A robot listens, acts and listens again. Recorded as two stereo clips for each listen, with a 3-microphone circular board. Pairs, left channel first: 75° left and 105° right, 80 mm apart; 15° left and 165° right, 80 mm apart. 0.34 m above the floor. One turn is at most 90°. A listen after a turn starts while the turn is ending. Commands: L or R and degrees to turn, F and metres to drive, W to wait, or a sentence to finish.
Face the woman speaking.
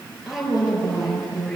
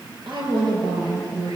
L90
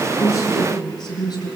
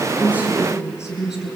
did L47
L90
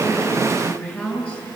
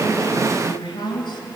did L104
Found it: a woman speaking, straight ahead.